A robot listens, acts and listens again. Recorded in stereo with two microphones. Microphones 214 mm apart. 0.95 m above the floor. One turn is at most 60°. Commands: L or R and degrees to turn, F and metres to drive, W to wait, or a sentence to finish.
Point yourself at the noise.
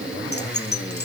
L50
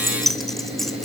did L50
Facing the keys jangling, 2 to 4 m away.